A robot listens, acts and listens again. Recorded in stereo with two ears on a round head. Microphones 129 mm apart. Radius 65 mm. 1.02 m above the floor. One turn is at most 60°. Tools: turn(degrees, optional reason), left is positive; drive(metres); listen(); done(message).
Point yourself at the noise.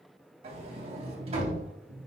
turn(degrees=-45, reason="The sliding door: about 45° right or 135° right.")
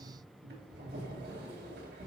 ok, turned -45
turn(degrees=-60, reason="So it is at 90° right.")
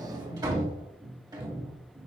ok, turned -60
turn(degrees=-30, reason="The sliding door is now 30° right.")
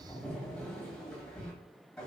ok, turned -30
done("Facing the sliding door.")